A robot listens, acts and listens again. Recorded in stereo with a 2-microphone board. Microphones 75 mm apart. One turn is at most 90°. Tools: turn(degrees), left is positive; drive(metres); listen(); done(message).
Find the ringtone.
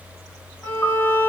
listen()
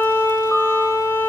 listen()
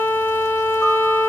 done("I can't make out a ringtone, only a piano and a violin.")